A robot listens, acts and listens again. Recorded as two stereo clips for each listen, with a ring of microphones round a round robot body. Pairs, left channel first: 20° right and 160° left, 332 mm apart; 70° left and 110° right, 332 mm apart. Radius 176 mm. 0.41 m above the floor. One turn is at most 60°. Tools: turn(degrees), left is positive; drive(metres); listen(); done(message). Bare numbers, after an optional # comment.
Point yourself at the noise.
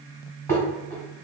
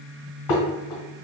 # The dishes clattering: 60° left.
turn(60)
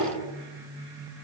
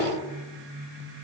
listen()
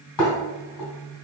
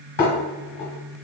done("Found it: dishes clattering, straight ahead.")